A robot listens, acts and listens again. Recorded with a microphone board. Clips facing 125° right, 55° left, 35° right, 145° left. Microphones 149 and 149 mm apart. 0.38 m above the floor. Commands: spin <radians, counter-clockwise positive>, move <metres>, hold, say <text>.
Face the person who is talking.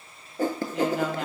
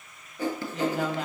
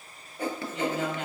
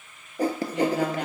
spin 2.53
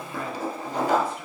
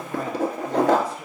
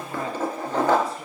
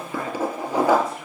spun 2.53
hold
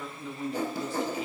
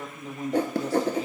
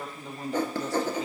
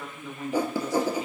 spin 0.26
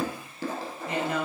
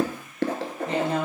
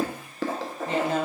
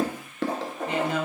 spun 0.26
say Found it: a woman speaking, straight ahead.